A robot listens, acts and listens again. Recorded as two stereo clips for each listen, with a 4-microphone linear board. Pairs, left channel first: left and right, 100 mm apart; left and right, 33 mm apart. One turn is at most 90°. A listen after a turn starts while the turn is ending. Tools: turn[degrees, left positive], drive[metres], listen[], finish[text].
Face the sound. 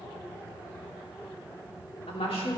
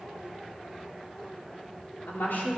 Action: turn[90]
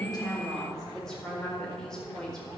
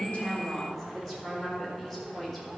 Thought: So it is at 10° left.
Action: turn[10]
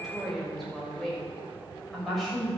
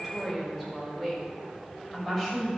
Action: finish[Found it: a woman speaking, straight ahead.]